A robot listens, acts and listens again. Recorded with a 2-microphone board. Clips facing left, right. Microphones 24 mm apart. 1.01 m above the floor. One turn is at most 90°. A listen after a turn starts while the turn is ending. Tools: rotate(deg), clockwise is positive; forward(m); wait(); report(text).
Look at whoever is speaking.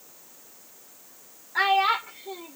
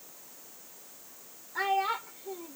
rotate(-65)
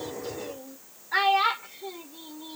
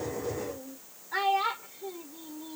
rotate(-40)
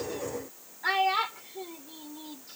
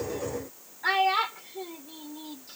report("Facing the child speaking.")